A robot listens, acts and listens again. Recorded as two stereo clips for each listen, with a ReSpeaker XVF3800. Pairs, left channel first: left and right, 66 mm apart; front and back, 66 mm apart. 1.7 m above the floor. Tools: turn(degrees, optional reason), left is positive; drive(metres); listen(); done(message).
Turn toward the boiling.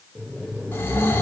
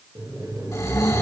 turn(degrees=-155, reason="The boiling: 155° right.")
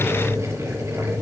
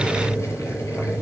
turn(degrees=-45, reason="The boiling is now 45° right.")
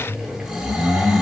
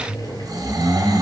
turn(degrees=-10, reason="The boiling is now 10° right.")
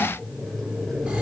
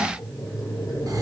done("Found it: boiling, straight ahead, over 4 m away.")